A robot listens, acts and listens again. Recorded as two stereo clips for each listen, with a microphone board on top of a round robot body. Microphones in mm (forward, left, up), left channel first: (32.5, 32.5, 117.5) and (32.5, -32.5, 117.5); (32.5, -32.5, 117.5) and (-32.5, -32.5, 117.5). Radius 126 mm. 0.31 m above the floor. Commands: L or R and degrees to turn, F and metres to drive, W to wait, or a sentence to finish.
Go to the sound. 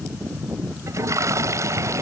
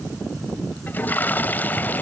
R60
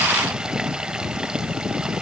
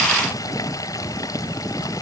W
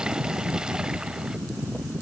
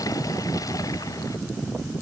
W
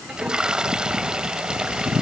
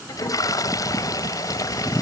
R10
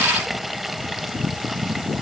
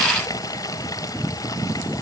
F1.0
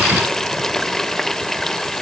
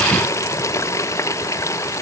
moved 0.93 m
L10
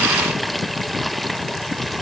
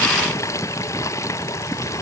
F1.0
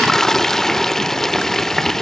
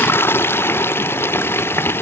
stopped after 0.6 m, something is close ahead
L10
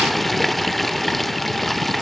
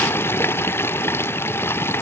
I am next to the toilet flushing.